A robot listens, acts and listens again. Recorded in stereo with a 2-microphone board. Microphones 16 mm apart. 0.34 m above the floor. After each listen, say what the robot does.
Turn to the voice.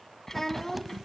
Turn 20° left.
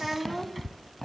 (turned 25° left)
Facing the child speaking, 2 to 4 m away.